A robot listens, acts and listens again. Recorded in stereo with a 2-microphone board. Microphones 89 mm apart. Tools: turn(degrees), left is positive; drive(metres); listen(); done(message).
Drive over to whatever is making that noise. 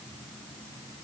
listen()
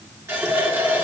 turn(degrees=-30)
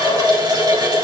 turn(degrees=-115)
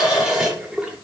drive(metres=1.0)
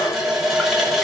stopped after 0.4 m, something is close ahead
done("Something is in my way. I am facing the running tap but have not reached it.")